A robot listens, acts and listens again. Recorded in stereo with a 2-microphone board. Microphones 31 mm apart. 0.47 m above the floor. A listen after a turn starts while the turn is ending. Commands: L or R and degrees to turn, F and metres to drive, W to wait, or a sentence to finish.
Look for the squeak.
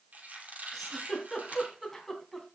R55
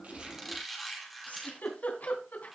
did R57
Facing the squeak.